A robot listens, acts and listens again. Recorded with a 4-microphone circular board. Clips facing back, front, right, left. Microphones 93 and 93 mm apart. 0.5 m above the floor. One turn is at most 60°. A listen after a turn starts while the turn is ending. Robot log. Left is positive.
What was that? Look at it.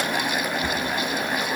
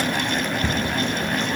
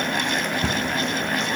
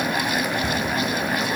note: The cupboard door: 105° right.
cmd yaw -60
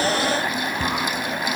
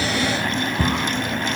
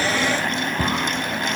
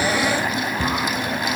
note: The cupboard door is now 50° right.
cmd yaw -50
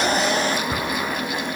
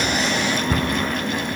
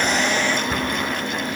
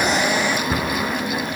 note: The cupboard door is now 10° left.
cmd yaw +10
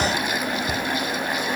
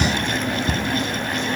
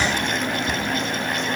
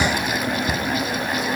end: Found it: a cupboard door, straight ahead.